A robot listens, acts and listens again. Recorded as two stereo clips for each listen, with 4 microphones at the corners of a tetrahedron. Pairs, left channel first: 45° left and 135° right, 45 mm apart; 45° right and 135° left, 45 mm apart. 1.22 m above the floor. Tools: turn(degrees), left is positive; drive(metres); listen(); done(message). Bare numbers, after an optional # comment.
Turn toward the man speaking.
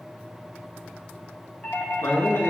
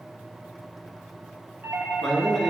# The man speaking: 40° left.
turn(40)
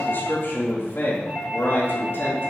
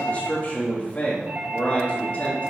# The man speaking is now 15° left.
turn(15)
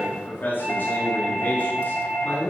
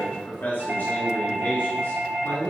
done("Facing the man speaking, 2 to 4 m away.")